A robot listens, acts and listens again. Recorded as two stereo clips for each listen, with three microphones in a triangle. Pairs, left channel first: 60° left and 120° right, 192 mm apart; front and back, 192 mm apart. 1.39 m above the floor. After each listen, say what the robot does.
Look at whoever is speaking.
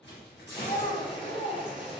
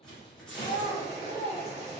Turn 15° left.
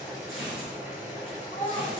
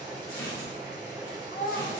Found it: a child speaking, straight ahead, 1 to 2 m away.